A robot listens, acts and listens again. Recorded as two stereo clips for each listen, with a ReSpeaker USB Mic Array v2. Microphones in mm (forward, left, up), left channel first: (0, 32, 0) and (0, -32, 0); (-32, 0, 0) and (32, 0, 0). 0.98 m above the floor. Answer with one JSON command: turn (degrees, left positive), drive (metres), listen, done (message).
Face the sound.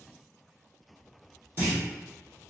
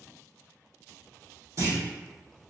{"turn": -35}
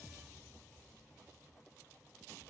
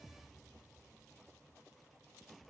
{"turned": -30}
{"done": "Facing where the clunk came from. I can't hear it now."}